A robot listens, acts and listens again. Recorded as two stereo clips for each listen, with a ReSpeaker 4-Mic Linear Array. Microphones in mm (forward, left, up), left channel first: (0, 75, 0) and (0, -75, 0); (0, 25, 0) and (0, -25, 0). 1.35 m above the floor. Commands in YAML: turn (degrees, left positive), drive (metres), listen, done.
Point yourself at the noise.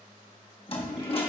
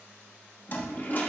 turn: 40
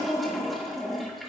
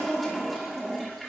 done: "Facing the toilet flushing."